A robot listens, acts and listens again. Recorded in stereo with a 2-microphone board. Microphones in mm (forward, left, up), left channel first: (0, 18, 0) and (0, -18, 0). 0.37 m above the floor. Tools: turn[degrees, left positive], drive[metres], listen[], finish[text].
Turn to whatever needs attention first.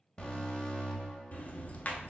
Thought: The alarm: about 25° left or 155° left.
Action: turn[25]
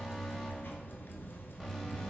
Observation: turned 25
Action: finish[Facing the alarm.]